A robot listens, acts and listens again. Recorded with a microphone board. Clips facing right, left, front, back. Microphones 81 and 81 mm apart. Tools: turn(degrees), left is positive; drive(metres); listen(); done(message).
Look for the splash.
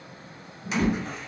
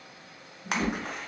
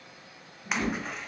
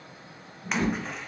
turn(degrees=85)
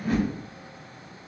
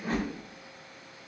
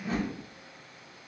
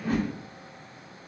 done("I heard a splash from this way, but can't make it out now.")